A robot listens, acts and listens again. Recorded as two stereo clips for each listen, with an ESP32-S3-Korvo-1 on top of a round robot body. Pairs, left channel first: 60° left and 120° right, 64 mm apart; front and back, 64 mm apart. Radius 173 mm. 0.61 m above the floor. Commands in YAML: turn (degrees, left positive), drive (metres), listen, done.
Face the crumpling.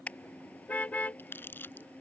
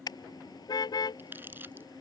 turn: 120
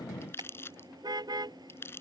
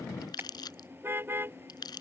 done: "Found it: crumpling, straight ahead."